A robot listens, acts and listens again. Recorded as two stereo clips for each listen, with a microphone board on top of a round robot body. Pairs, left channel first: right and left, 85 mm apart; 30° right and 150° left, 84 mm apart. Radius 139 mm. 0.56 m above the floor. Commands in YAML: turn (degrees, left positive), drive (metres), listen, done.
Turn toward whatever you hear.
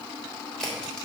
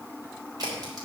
turn: -170
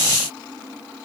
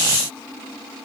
done: "Facing where the crack came from. I can't hear it now."